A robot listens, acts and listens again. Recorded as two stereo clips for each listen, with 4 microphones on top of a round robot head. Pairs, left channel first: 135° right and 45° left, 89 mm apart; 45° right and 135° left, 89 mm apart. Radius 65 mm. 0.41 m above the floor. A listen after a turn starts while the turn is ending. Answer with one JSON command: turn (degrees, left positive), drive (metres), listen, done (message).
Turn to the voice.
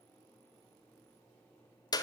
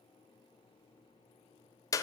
{"listen": true}
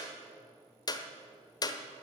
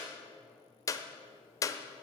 {"listen": true}
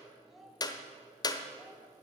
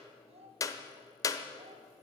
{"turn": 135}
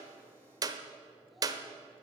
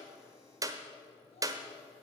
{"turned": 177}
{"turn": -45}
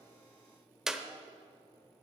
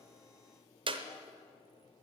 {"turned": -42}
{"listen": true}
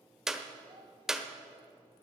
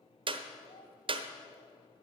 {"done": "I heard a child speaking from this way, but can't make it out now."}